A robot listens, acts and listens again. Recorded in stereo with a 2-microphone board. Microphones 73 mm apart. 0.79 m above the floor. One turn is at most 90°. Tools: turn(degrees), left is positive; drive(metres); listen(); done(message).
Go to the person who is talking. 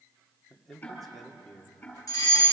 turn(degrees=30)
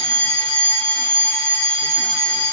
listen()
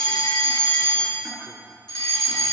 listen()
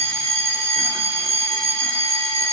done("I heard a man speaking, but can't make it out now. It was about 25° right or 145° left. I did not reach it.")